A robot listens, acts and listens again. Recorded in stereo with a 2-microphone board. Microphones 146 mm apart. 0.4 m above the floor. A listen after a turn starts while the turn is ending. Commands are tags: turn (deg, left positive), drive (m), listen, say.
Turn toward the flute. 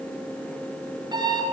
<listen/>
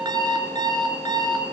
<listen/>
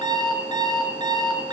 <say>I can't make out a flute to turn to.</say>